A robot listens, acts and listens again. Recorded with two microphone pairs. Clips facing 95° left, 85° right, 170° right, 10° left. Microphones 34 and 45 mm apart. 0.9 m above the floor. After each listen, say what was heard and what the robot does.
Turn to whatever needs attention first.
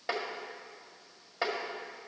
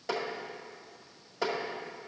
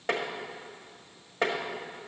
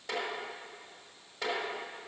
Keep listening.
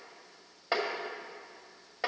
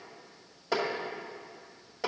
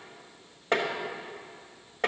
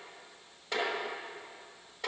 Keep listening.
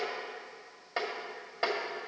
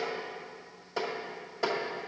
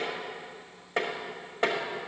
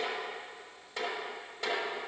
I can't make out anything urgent to turn to.